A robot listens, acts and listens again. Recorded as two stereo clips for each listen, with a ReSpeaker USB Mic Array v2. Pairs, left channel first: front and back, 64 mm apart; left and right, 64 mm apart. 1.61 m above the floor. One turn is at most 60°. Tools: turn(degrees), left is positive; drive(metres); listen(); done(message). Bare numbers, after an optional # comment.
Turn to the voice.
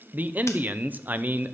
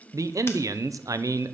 # The man speaking: 120° right.
turn(-60)
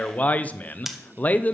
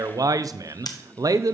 # The man speaking is now 65° right.
turn(-60)
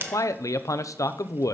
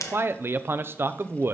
# The man speaking is now 35° right.
turn(-35)
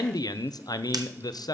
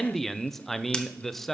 done("Found it: a man speaking, straight ahead, under 1 m away.")